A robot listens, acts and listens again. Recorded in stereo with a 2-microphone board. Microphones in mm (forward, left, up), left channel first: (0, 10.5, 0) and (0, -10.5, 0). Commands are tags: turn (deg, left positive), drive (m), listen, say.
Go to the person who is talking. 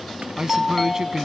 <turn deg="-30"/>
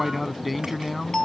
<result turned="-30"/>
<drive m="1.0"/>
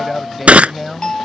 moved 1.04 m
<drive m="1.0"/>
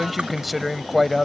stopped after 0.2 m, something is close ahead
<say>Arrived at the man speaking, straight ahead.</say>